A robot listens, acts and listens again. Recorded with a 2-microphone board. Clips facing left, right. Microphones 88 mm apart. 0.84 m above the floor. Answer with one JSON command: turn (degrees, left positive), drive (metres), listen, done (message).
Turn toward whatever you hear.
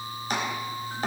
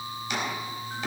{"turn": 40}
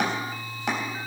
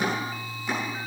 {"turn": 100}
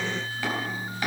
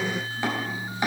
{"turn": -20}
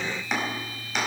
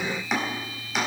{"done": "Facing the chopping, over 4 m away."}